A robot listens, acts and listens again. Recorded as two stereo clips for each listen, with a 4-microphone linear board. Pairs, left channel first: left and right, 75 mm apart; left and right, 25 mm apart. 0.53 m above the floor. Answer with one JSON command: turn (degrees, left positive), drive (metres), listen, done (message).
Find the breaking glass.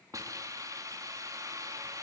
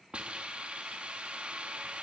{"listen": true}
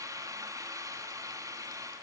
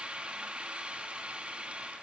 {"listen": true}
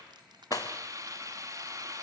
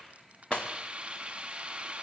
{"turn": 55}
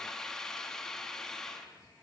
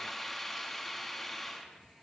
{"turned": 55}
{"listen": true}
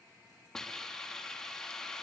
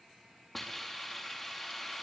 {"done": "I heard breaking glass, but can't make it out now. It was about straight ahead or 70° left."}